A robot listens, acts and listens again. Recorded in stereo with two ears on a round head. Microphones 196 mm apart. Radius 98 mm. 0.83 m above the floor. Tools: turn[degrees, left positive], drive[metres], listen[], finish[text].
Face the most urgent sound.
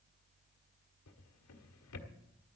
Action: listen[]
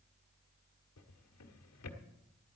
Action: listen[]
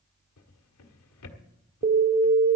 Thought: The alarm: about 40° right or 140° right.
Action: turn[-40]
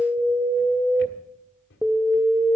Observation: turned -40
Action: finish[Found it: an alarm, straight ahead.]